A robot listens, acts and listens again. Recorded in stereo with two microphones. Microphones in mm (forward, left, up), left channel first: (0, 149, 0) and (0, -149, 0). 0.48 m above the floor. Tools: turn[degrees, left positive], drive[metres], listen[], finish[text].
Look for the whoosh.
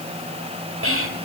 Action: listen[]
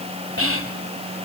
Action: listen[]
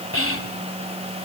Action: finish[I can't make out a whoosh to turn to.]